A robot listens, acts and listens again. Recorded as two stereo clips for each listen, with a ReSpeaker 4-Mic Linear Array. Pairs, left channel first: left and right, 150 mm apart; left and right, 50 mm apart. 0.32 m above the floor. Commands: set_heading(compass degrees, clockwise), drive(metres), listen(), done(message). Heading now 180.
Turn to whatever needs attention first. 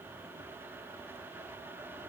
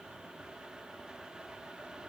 listen()
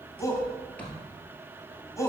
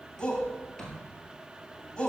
set_heading(160)
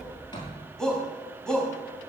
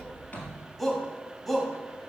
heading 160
done("Found it: a shout, straight ahead.")